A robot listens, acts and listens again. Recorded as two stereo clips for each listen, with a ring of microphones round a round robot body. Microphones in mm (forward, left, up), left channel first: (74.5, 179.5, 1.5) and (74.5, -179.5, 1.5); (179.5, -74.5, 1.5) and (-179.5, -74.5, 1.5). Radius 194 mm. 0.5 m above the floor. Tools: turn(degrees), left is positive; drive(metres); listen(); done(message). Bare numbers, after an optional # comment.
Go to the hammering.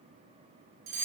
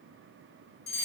listen()
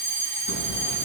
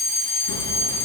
# The hammering: 50° left.
turn(50)
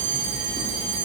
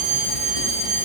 # The hammering is now 10° left.
turn(10)
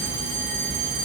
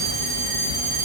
drive(1.0)
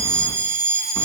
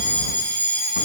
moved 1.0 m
listen()
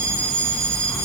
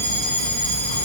drive(1.0)
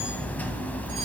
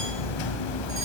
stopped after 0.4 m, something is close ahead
done("I am next to the hammering.")